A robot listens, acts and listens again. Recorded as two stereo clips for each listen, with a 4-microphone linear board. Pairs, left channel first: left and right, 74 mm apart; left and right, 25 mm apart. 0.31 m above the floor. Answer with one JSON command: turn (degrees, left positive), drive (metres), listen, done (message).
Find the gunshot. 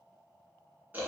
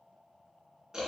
{"listen": true}
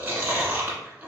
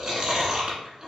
{"listen": true}
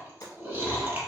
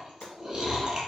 {"turn": 55}
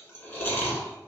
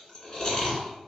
{"listen": true}
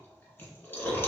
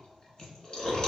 {"done": "I heard a gunshot, but can't make it out now. It was about straight ahead or 70° left."}